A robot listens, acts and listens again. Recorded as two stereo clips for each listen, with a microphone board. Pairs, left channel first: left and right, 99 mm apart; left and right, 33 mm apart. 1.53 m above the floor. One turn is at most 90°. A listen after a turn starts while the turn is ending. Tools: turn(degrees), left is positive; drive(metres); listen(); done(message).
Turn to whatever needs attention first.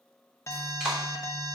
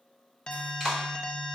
turn(degrees=30)
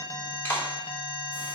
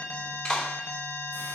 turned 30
turn(degrees=90)
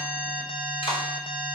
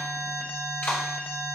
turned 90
turn(degrees=70)
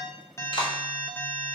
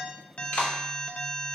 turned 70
turn(degrees=20)
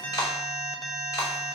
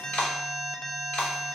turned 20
done("Facing the alarm.")